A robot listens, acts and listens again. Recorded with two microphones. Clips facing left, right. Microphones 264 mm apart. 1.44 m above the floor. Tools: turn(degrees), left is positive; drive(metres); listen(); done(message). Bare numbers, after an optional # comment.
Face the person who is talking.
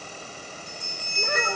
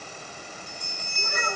turn(90)
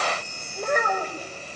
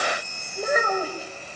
done("Found it: a child speaking, straight ahead, over 4 m away.")